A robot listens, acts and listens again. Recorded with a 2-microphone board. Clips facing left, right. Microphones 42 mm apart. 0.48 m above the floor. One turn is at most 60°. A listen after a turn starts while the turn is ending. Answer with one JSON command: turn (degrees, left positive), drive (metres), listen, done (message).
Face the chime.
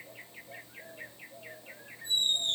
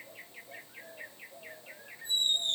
{"listen": true}
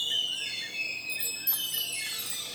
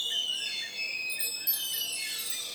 {"turn": 60}
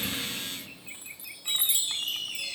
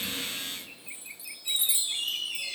{"turn": 60}
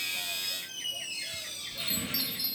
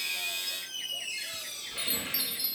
{"turn": -10}
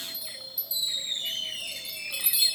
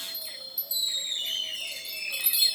{"done": "Facing the chime, 1 to 2 m away."}